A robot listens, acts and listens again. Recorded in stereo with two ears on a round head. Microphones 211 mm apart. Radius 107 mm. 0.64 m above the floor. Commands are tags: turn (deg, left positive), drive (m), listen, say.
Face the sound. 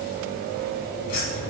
<turn deg="75"/>
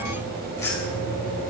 <turn deg="15"/>
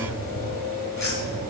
<turn deg="15"/>
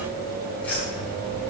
<say>Found it: keys jangling, straight ahead.</say>